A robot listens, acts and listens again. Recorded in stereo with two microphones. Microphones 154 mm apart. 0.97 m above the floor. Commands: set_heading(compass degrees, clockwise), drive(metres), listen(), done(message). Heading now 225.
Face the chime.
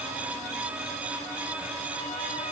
listen()
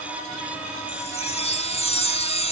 set_heading(185)
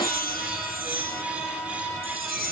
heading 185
set_heading(90)
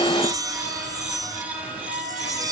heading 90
set_heading(115)
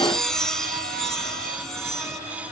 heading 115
done("Facing the chime.")